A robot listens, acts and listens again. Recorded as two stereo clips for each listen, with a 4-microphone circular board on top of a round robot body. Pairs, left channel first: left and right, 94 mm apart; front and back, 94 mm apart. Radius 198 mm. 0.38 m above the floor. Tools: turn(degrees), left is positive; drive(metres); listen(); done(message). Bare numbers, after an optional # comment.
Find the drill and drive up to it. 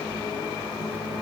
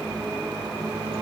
listen()
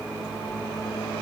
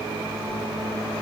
listen()
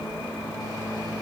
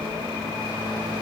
done("I can't make out a drill.")